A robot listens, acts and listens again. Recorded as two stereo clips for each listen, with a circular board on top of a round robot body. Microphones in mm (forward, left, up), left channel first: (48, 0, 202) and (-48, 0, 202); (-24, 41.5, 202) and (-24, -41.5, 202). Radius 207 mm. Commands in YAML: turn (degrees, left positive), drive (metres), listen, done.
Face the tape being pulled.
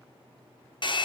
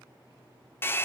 listen: true
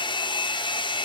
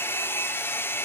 listen: true
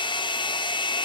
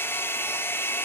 done: "I can't make out tape being pulled to turn to."